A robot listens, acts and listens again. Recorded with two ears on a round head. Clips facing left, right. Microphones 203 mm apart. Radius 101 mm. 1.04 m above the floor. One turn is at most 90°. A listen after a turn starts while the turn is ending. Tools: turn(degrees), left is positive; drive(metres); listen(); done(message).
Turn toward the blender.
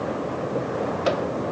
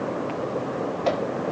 listen()
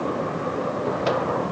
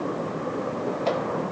listen()
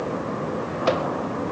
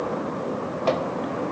done("I can't make out a blender to turn to.")